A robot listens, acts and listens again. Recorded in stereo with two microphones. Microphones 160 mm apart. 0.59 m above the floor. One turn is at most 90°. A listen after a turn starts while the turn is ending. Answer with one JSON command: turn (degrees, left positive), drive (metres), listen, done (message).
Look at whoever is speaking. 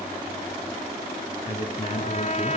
{"turn": 35}
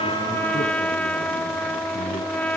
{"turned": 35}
{"listen": true}
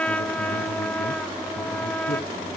{"listen": true}
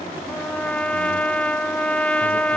{"done": "I heard a man speaking, but can't make it out now. It was about straight ahead or 110° left."}